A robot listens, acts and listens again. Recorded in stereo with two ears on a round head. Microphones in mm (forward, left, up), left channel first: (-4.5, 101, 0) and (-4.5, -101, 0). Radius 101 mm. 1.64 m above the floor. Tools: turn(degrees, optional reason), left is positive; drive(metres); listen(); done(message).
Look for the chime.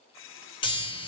turn(degrees=25, reason="The chime: about 25° left or 155° left.")
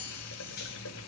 turn(degrees=135, reason="So it is at 135° left.")
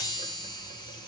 turn(degrees=20, reason="The chime is now 20° left.")
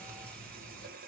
done("Found it: a chime, straight ahead, 2 to 4 m away.")